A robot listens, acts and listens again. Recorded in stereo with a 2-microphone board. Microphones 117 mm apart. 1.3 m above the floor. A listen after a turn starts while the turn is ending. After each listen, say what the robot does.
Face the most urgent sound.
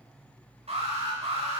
Turn 60° right.
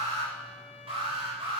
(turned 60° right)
Turn 55° right.
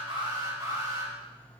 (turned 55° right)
Turn 35° right.
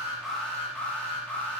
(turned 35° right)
Turn 10° left.
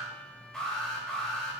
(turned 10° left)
Found it: an alarm, straight ahead.